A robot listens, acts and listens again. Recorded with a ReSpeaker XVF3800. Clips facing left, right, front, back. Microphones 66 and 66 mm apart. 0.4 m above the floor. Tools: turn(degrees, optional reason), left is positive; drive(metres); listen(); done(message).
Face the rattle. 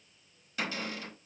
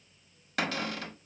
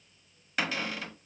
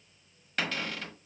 listen()
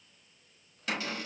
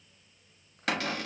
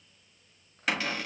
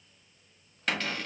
listen()
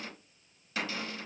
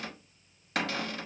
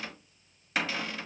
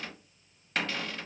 done("I can't make out a rattle to turn to.")